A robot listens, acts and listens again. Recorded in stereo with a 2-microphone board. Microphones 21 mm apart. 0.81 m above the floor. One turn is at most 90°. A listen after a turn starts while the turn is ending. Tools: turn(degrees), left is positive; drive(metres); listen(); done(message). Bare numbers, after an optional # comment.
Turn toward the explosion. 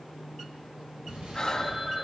# The explosion: about 65° right or 115° right.
turn(-65)
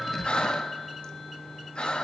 listen()
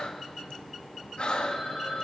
done("I heard an explosion, but can't make it out now. It was about straight ahead or 50° right.")